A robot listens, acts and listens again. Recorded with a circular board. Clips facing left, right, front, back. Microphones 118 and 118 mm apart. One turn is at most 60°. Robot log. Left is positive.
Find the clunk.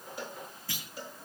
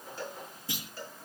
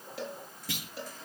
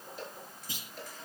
note: The clunk: 20° right.
cmd yaw -20
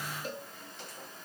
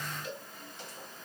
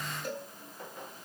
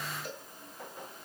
end: Facing where the clunk came from. I can't hear it now.